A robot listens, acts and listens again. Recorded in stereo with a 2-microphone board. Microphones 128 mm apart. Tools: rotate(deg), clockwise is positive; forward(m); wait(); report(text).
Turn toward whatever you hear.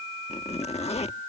rotate(-55)
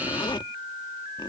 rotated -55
rotate(-45)
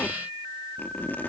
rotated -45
rotate(-15)
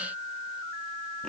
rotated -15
wait()
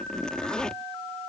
report("Facing the zipper.")